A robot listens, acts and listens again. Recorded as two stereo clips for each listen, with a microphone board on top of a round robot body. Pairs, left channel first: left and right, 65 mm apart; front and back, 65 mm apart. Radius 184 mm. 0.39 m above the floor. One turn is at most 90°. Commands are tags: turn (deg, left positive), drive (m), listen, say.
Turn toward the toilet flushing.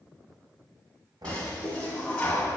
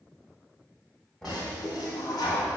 <turn deg="15"/>
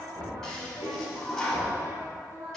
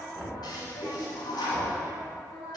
<say>Found it: a toilet flushing, straight ahead, 1 to 2 m away.</say>